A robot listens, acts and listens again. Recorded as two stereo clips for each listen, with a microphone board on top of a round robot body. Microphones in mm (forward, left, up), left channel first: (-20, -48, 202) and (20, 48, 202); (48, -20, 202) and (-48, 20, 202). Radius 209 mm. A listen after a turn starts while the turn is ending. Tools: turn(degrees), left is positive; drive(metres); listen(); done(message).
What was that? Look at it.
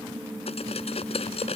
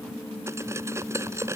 turn(degrees=-135)
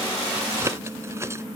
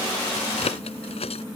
done("Facing the cutlery clinking.")